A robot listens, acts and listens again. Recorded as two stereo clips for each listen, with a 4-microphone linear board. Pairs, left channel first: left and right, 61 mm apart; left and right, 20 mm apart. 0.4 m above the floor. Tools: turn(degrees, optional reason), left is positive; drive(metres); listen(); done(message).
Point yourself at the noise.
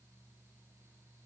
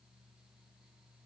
listen()
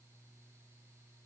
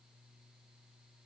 listen()
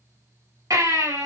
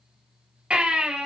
turn(degrees=-75, reason="The baby crying: about 75° right or 105° right.")
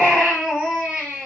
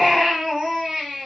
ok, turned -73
done("Facing the baby crying, over 4 m away.")